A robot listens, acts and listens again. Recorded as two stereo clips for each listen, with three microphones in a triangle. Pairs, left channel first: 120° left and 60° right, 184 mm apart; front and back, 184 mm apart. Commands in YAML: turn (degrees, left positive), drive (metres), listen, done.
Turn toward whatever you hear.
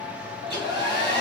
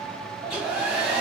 turn: 100
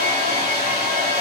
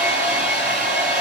done: "Facing the hair dryer, 1 to 2 m away."